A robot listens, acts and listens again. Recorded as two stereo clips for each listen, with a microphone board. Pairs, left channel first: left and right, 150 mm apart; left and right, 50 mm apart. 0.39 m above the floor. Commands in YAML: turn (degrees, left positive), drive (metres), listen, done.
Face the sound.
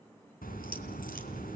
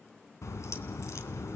turn: 75
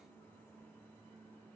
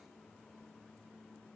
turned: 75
listen: true
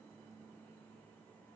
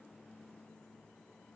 done: "I heard a crack, but can't make it out now. It was about straight ahead or 30° left."